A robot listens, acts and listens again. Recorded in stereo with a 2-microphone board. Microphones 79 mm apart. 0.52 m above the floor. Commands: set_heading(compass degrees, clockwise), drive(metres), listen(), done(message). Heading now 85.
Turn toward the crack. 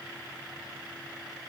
listen()
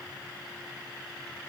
listen()
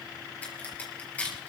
set_heading(65)
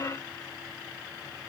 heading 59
listen()
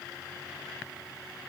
done("I heard a crack, but can't make it out now. It was about 5° right or 135° left.")